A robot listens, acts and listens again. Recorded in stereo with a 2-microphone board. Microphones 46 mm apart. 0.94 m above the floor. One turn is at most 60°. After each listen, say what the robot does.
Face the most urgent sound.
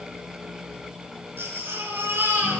Turn 60° right.
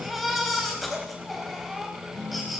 Found it: a baby crying, straight ahead.